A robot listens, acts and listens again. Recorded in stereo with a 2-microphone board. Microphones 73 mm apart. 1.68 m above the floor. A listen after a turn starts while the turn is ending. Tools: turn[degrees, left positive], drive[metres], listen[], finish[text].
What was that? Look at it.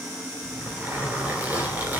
Thought: The zipper: about 20° right or 160° right.
Action: turn[-20]
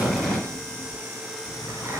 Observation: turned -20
Thought: So it is at 135° right.
Action: turn[-135]
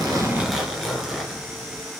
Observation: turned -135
Action: finish[Facing the zipper, 2 to 4 m away.]